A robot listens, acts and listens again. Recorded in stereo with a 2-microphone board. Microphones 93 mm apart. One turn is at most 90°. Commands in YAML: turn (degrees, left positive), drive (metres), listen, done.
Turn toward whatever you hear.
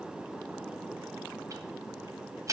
turn: -35
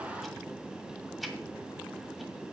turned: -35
done: "Facing the ticking."